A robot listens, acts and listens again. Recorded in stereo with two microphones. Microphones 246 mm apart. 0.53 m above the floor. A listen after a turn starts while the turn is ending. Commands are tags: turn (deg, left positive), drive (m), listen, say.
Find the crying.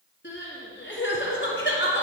<turn deg="50"/>
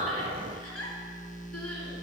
<turn deg="85"/>
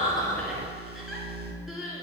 <say>Facing the crying.</say>